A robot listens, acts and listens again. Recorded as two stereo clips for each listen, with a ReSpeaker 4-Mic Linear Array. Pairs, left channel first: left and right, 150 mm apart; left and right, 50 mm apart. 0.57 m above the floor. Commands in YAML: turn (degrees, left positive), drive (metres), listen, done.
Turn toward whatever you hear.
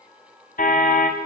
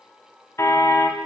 turn: 65
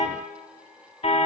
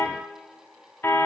turn: 45
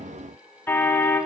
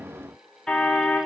turn: 15
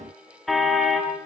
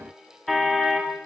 done: "Found it: a car horn, straight ahead."